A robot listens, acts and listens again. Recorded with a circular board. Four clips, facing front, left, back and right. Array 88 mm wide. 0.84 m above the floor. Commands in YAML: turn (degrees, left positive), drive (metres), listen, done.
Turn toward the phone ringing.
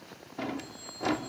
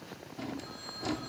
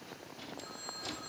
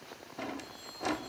turn: 130
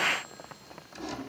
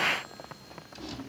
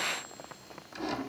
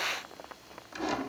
listen: true
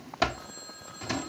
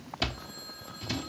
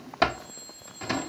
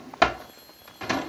turn: 40
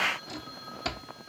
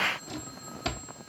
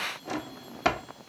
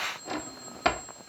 turn: 15
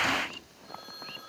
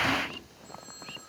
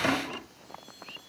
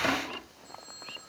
done: "Facing the phone ringing."